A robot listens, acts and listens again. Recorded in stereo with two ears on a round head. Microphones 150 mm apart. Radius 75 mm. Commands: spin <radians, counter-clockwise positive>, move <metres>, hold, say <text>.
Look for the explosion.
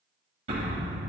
spin -0.70
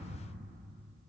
hold
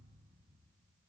say I heard an explosion, but can't make it out now. It was about straight ahead or 100° right.